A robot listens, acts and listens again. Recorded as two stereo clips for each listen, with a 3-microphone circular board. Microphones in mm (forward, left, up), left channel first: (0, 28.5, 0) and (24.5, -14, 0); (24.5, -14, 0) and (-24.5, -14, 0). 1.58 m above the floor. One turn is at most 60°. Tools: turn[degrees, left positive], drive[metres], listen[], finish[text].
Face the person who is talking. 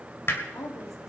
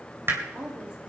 Thought: The woman speaking: 110° left.
Action: turn[60]
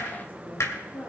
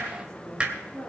Thought: The woman speaking is now 70° left.
Action: turn[60]
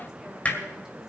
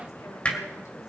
Thought: Nothing new. It was at 10° left.
Action: turn[10]
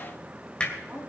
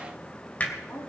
Thought: The woman speaking is now 10° left.
Action: turn[10]
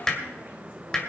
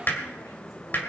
Action: listen[]
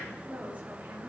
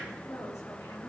Action: finish[Found it: a woman speaking, straight ahead.]